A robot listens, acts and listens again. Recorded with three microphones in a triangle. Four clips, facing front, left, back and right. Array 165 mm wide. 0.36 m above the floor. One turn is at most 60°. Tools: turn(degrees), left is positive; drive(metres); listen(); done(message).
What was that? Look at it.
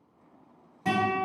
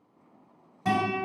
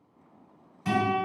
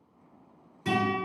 turn(degrees=60)
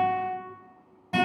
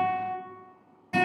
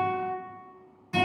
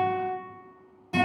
turn(degrees=10)
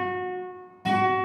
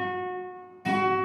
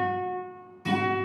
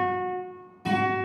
done("Facing the guitar, 1 to 2 m away.")